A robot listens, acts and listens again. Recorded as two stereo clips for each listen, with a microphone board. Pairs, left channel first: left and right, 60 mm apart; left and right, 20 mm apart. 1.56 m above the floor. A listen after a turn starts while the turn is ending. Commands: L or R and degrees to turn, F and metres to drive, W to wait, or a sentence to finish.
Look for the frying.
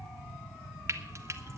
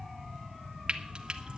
R45
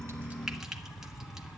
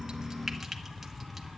W
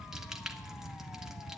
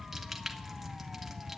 W
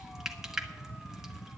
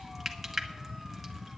Found it: frying, straight ahead.